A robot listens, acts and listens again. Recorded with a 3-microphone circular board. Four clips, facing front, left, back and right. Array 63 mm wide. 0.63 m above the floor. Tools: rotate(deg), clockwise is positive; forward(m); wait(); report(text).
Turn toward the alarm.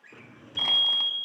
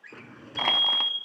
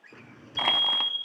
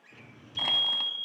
rotate(15)
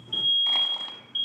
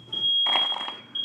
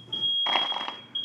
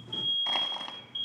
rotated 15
report("Found it: an alarm, straight ahead.")